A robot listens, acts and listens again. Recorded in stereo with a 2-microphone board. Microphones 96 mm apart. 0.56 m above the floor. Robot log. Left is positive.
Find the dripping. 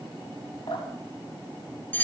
note: The dripping: about 65° left or 115° left.
cmd yaw +65
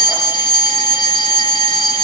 cmd idle
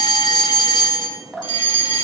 end: Found it: dripping, straight ahead, over 4 m away.